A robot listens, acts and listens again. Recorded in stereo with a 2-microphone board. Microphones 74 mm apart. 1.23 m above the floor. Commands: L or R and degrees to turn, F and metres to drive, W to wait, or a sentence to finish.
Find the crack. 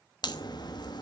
L65
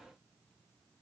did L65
W
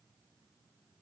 I heard a crack, but can't make it out now. It was about straight ahead or 50° left.